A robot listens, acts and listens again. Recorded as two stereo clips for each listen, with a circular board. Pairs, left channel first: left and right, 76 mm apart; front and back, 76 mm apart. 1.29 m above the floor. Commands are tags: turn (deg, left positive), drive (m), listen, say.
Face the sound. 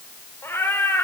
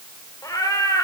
<turn deg="35"/>
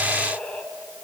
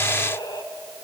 <turn deg="15"/>
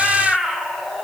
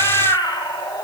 <say>Facing the cat meowing.</say>